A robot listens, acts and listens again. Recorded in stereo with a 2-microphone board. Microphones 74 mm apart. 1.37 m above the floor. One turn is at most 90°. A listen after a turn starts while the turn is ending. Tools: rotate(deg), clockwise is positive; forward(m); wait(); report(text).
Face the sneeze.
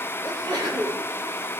rotate(75)
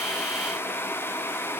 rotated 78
wait()
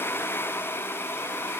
report("I heard a sneeze, but can't make it out now. It was about 5° left or 25° right.")